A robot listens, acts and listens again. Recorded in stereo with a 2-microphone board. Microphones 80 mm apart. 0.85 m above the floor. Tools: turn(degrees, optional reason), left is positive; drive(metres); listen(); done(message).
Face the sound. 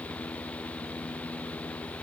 listen()
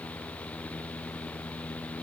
listen()
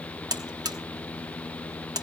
turn(degrees=-50, reason="The buzzer: about 50° right or 130° right.")
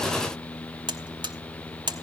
turn(degrees=-75, reason="So it is at 75° right.")
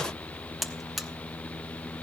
done("Facing the buzzer.")